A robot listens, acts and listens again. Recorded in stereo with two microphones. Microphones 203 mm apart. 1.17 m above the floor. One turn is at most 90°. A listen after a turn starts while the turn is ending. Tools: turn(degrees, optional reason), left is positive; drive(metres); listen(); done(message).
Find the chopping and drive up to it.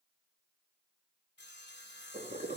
listen()
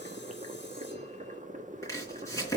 turn(degrees=30)
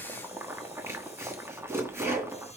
turn(degrees=-15, reason="So it is at 15° right.")
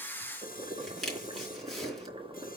drive(metres=1.0)
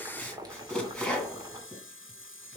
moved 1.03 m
drive(metres=1.0)
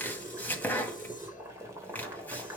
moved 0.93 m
turn(degrees=10, reason="The chopping is now 10° left.")
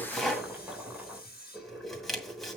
drive(metres=1.0)
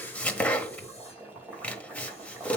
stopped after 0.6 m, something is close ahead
turn(degrees=10, reason="The chopping is now 10° left.")
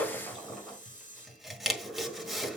done("Arrived at the chopping, straight ahead.")